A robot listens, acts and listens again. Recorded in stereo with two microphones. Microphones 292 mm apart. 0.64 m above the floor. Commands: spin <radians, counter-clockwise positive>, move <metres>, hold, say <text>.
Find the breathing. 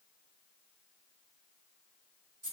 hold
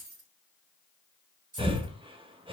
spin -0.26
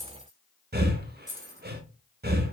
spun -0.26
spin -2.62
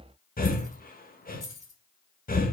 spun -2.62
spin 0.52
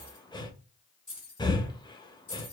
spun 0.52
spin 0.26
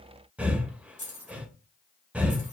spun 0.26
say Found it: breathing, straight ahead, under 1 m away.